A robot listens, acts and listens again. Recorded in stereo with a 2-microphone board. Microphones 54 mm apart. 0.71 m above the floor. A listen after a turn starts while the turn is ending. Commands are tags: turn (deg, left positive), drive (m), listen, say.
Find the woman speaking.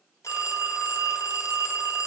<listen/>
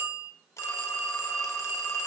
<listen/>
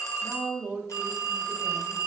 <turn deg="-30"/>
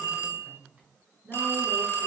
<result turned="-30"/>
<turn deg="-30"/>
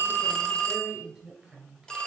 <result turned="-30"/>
<say>Found it: a woman speaking, straight ahead.</say>